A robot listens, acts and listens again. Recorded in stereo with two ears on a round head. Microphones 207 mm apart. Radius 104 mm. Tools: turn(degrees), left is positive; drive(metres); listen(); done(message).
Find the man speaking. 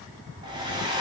listen()
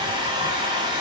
listen()
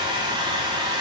done("I can't make out a man speaking, only a hair dryer.")